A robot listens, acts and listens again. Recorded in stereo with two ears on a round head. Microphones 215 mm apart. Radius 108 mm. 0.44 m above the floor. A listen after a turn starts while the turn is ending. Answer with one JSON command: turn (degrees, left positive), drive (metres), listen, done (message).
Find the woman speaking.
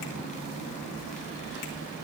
{"listen": true}
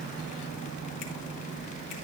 {"listen": true}
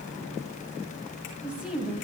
{"turn": -30}
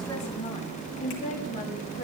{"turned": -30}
{"turn": 35}
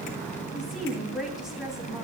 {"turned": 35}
{"done": "Facing the woman speaking."}